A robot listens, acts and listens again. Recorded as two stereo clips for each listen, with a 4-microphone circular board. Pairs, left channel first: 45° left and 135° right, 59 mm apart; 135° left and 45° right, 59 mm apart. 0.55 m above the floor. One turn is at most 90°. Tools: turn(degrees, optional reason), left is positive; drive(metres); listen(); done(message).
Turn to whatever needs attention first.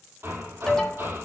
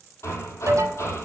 turn(degrees=-35, reason="The alarm: 35° right.")
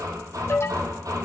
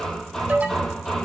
turn(degrees=15, reason="The alarm is now 15° left.")
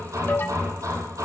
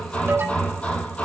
done("Found it: an alarm, straight ahead, 2 to 4 m away.")